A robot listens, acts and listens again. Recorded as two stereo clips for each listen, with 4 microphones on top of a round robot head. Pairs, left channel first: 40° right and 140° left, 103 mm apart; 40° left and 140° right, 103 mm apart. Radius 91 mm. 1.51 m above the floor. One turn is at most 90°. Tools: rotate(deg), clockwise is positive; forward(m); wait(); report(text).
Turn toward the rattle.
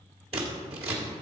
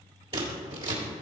wait()
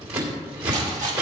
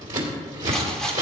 rotate(-90)
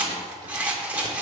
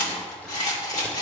rotate(-65)
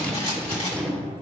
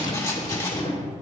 rotate(15)
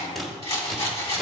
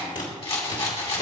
report("Found it: a rattle, straight ahead.")